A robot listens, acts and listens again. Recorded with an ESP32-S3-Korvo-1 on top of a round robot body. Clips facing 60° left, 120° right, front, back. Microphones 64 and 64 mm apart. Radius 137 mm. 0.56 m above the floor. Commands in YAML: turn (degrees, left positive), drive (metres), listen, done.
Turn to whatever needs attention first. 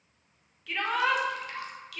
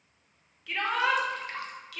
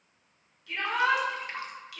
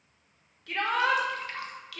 turn: 150
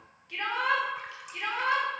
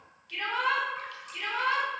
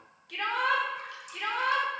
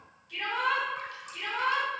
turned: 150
done: "Facing the shout, 2 to 4 m away."